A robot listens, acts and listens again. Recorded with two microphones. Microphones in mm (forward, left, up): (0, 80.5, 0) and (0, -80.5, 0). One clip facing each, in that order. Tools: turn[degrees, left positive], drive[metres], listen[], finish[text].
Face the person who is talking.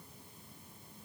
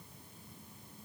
Action: listen[]
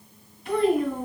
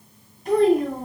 Thought: The child speaking: about 40° right or 140° right.
Action: turn[-40]
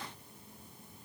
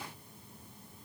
Action: listen[]
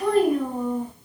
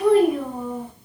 Action: finish[Facing the child speaking, 2 to 4 m away.]